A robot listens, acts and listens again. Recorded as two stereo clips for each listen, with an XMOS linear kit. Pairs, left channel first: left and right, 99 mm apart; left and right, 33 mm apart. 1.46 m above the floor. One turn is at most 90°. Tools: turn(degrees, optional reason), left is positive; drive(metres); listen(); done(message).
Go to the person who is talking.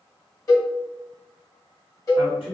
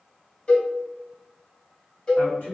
turn(degrees=70, reason="The man speaking: about 70° left or 110° left.")
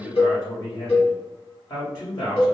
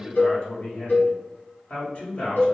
turn(degrees=40, reason="So it is at 40° left.")
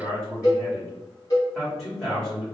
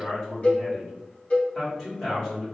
drive(metres=1.0)
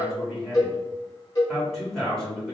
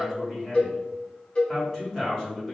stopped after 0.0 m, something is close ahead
done("Something is in my way. I am facing the man speaking but have not reached it.")